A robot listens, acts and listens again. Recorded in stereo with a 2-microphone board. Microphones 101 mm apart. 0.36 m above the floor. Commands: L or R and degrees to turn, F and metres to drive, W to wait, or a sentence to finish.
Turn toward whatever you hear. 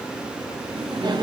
R45
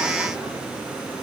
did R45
W
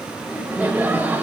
R15
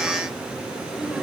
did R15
R10
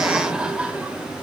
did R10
R10
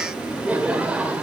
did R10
R15
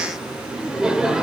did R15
Found it: laughter, straight ahead.